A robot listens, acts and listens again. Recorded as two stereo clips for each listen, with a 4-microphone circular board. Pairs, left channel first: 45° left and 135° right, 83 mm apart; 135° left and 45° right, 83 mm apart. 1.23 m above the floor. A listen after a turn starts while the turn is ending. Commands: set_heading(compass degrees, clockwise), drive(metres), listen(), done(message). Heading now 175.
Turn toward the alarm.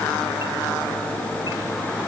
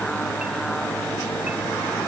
listen()
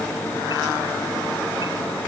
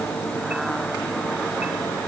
listen()
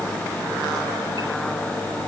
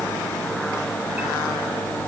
done("I can't make out an alarm.")